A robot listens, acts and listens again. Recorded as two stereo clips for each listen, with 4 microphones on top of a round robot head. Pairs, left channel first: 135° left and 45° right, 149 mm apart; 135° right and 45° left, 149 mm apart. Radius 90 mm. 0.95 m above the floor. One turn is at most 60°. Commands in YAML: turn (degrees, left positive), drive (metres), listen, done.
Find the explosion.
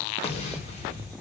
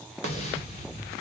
turn: 60
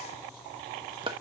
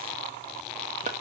turn: 60
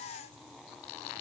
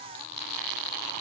turn: 60
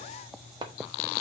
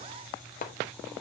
done: "I heard an explosion from this way, but can't make it out now."